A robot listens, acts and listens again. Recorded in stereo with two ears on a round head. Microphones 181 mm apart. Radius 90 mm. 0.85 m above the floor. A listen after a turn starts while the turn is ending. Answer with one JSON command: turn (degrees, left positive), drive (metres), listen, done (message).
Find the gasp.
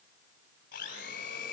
{"listen": true}
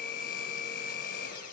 {"listen": true}
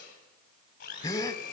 {"turn": 15}
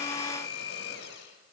{"listen": true}
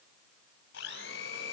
{"done": "I heard a gasp, but can't make it out now. It was about straight ahead or 150° left."}